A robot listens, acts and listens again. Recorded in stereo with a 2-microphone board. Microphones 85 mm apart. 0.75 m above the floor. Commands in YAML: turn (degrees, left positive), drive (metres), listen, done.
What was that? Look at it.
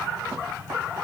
listen: true
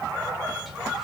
listen: true
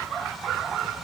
done: "I can't make out anything."